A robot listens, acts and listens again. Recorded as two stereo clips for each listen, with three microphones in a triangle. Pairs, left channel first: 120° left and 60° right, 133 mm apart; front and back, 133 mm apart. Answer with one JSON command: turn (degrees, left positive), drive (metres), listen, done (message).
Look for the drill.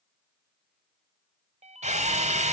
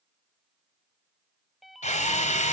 {"turn": -30}
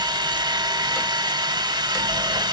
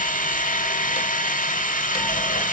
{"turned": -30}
{"done": "Facing the drill, 1 to 2 m away."}